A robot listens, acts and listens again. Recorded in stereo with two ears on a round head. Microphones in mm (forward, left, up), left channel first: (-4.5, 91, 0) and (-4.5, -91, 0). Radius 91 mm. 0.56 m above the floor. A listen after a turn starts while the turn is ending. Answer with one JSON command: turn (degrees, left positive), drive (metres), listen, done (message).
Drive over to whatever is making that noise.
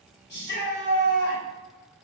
{"turn": 55}
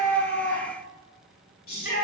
{"turn": 55}
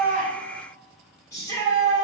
{"turn": 20}
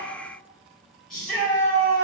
{"drive": 1.0}
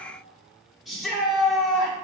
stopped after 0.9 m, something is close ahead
{"done": "I am next to the shout."}